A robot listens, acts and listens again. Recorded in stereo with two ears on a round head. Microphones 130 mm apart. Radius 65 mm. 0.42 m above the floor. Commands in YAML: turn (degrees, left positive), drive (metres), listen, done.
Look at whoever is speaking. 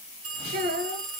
turn: -70
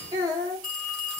turn: -30
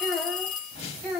done: "Found it: a child speaking, straight ahead, 2 to 4 m away."